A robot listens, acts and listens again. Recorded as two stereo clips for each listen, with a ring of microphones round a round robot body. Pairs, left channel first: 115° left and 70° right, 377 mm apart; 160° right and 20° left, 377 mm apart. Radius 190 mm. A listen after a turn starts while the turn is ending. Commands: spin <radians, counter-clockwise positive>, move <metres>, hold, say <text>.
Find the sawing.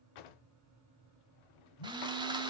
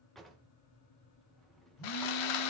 spin -2.53
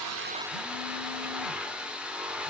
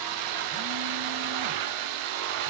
spin 0.35
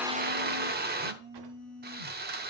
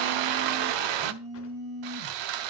say Found it: sawing, straight ahead.